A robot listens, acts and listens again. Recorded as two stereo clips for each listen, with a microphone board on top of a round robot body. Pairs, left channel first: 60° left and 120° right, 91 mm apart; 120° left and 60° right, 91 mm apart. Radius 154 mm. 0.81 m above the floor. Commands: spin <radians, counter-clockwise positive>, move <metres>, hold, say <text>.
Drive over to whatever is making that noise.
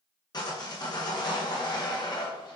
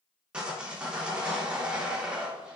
spin 0.35
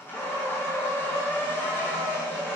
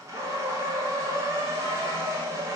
move 1.0
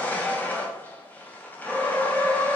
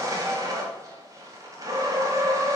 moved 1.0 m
spin -0.17
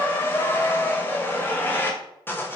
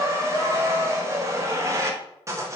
move 1.0
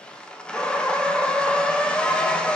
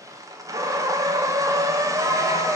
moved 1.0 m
spin -0.26
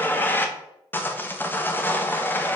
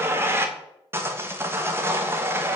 move 1.0
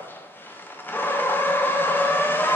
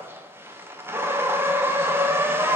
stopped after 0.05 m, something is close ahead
say I am next to the sawing.